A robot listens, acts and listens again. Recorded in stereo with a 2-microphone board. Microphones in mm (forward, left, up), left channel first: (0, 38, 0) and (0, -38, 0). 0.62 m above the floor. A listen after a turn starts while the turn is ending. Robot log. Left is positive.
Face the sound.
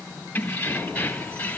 note: The keys jangling: about 20° left or 160° left.
cmd yaw +20
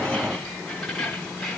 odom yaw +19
end: Found it: keys jangling, straight ahead.